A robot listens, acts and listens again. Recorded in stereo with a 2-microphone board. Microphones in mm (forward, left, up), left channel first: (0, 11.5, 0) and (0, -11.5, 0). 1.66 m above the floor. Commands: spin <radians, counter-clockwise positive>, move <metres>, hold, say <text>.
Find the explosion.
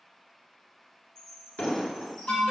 spin 1.31
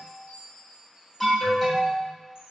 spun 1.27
hold
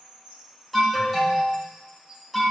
say I heard an explosion, but can't make it out now. It was about straight ahead or 35° left.